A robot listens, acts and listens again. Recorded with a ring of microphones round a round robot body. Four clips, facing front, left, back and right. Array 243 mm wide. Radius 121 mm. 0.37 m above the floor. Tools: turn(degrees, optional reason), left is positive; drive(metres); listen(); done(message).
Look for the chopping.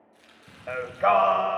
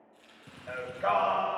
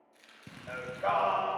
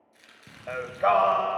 turn(degrees=-90, reason="The chopping: 90° right.")
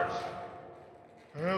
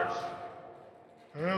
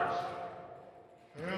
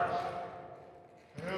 listen()
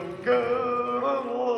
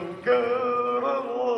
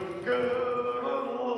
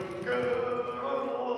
listen()
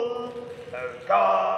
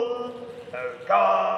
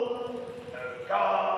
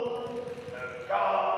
done("I heard chopping from this way, but can't make it out now.")